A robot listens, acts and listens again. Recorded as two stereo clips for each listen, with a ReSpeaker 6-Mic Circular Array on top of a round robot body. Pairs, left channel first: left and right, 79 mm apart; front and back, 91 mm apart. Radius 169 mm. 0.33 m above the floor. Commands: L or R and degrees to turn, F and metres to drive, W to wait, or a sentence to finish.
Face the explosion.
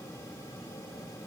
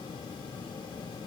W
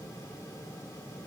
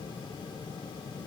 W
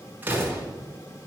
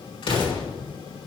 R25
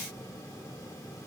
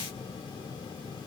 Facing where the explosion came from. I can't hear it now.